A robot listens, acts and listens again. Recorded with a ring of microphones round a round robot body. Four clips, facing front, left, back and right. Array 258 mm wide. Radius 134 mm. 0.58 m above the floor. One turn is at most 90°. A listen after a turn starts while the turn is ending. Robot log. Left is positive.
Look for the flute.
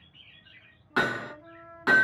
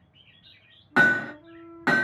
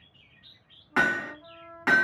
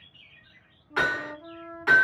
note: The flute: 90° right.
cmd yaw -90
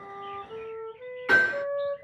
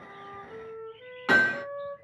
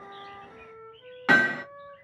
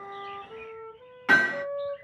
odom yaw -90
note: The flute is now 15° right.
cmd yaw -15
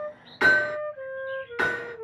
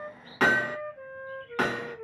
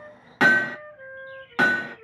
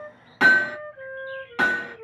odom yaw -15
end: Facing the flute, under 1 m away.